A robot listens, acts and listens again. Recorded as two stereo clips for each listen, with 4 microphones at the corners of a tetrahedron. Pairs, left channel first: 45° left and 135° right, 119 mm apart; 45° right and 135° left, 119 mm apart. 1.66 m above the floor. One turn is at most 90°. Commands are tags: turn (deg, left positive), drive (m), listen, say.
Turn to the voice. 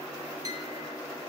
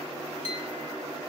<listen/>
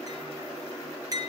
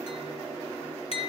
<listen/>
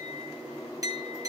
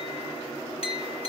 <say>I can't make out anyone speaking to turn to.</say>